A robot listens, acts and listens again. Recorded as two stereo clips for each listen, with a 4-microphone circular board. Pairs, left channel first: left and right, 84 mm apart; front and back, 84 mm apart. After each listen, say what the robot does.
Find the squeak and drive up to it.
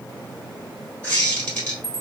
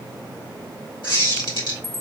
Turn 15° left.
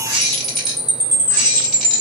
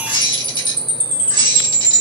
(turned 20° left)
Drive 1.0 m forward.
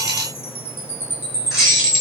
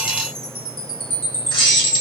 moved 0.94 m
Drive 1.0 m forward.
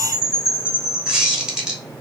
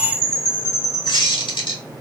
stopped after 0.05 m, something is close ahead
Turn 10° right.
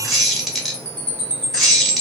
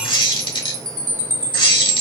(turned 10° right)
I am next to the squeak.